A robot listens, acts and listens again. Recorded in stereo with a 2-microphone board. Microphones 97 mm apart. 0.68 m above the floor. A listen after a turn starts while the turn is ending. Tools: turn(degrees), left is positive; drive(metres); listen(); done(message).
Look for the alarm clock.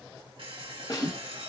turn(degrees=-70)
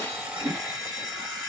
turn(degrees=-40)
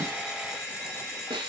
turn(degrees=-10)
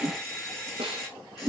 done("Facing the alarm clock.")